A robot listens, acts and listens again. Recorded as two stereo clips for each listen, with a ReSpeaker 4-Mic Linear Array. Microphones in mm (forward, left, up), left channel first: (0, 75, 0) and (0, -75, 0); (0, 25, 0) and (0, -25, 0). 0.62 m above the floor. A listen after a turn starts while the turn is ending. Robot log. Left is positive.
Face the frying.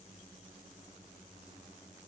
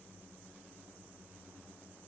cmd idle
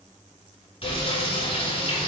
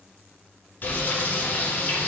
note: The frying: about 45° left or 135° left.
cmd yaw +45
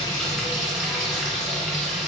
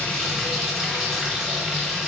end: Found it: frying, straight ahead, 1 to 2 m away.